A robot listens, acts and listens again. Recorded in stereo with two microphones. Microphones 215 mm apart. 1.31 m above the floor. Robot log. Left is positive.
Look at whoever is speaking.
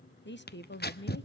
note: The woman speaking: about 60° left or 120° left.
cmd yaw +60
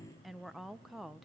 end: Facing the woman speaking, 1 to 2 m away.